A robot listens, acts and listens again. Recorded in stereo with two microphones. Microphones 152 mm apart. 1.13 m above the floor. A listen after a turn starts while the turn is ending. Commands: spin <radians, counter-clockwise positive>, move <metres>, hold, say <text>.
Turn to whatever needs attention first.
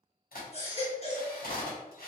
spin 0.79
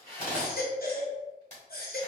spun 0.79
spin 1.57
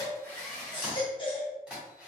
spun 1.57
spin 0.61
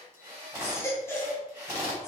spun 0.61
spin 0.26
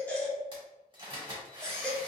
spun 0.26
say Found it: a baby crying, straight ahead, 1 to 2 m away.